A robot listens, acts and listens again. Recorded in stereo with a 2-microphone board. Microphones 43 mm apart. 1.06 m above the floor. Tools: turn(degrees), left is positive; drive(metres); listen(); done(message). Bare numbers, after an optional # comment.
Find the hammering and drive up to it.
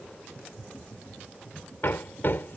# The hammering: about 55° left or 125° left.
turn(55)
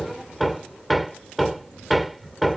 drive(1.0)
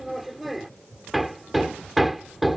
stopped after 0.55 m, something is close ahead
done("Blocked. The hammering is further on, straight ahead.")